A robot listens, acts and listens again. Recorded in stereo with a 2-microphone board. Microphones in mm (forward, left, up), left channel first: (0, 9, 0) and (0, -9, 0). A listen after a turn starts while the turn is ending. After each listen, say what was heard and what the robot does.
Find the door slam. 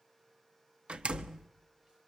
The door slam: about 75° right or 105° right. Turn 75° right.
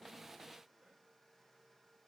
Keep listening.
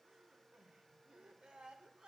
I heard a door slam, but can't make it out now. It was about straight ahead or 30° right.